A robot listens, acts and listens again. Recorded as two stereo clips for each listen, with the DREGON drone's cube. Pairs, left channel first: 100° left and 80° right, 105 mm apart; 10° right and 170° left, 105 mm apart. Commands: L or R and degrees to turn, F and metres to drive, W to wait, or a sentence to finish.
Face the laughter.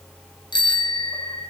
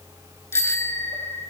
W
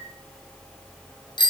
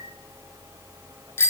W
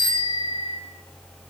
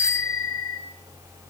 I can't make out laughter to turn to.